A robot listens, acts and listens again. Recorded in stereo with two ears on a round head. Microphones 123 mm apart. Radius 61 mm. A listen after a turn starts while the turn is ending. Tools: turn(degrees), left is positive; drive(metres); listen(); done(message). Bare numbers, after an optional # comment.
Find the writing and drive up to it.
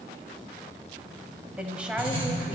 # The writing: about 40° right or 140° right.
turn(-40)
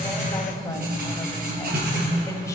# So it is at 100° right.
turn(-100)
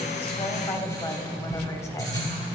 # The writing is now 25° left.
turn(25)
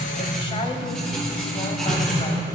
drive(1.0)
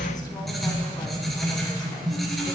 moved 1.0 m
drive(1.0)
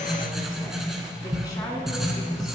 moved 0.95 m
drive(1.0)
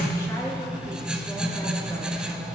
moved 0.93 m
drive(1.0)
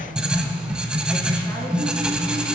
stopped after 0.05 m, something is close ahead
# The writing is now 10° right.
turn(-10)
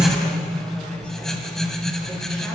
done("Arrived at the writing, straight ahead.")